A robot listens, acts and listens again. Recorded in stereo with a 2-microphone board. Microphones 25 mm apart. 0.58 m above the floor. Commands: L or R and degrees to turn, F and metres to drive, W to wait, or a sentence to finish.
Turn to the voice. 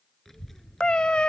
L30
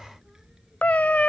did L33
R20
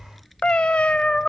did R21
Facing the child speaking.